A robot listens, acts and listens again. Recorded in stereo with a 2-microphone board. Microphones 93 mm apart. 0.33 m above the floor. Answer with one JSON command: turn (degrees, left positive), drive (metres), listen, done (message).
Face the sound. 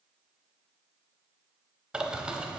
{"turn": -30}
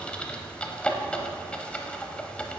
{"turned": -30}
{"turn": 15}
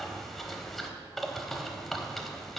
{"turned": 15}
{"done": "Facing the bird."}